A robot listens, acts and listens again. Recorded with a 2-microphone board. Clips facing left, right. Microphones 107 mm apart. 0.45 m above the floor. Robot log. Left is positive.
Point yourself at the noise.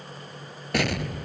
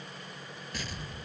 note: The explosion: about 75° left or 105° left.
cmd yaw +75
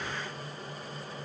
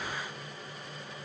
cmd idle
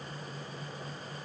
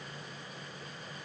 end: I heard an explosion, but can't make it out now. It was about straight ahead or 30° left.